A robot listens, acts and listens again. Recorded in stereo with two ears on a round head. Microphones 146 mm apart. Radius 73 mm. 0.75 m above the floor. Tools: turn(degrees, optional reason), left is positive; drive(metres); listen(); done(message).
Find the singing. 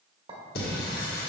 turn(degrees=60, reason="The singing: about 60° left or 120° left.")
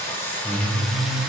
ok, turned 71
done("Found it: singing, straight ahead.")